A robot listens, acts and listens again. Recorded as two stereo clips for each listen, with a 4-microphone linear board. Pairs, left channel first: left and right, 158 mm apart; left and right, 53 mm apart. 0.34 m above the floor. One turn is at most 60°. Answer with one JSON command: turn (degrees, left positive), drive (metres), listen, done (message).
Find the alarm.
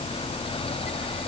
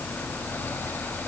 {"listen": true}
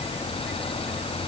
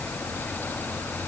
{"listen": true}
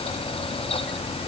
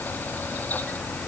{"done": "I can't make out an alarm."}